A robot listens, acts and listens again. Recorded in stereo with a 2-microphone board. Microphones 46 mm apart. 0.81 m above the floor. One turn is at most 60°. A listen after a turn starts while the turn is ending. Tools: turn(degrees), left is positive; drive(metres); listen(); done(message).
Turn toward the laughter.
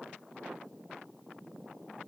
listen()
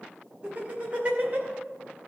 turn(degrees=-30)
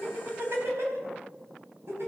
turn(degrees=-60)
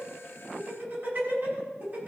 turn(degrees=-45)
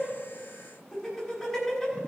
done("Found it: laughter, straight ahead.")